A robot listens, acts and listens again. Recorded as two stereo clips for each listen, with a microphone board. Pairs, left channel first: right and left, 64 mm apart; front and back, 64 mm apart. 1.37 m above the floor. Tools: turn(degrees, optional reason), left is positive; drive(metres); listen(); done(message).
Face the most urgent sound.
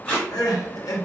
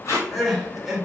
turn(degrees=-90, reason="The crying: 90° right.")
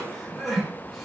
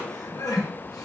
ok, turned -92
done("Found it: crying, straight ahead.")